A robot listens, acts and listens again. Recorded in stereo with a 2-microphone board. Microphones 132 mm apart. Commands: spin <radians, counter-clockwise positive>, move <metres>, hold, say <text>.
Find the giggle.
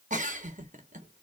spin -1.57
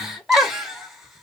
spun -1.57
say Found it: a giggle, straight ahead.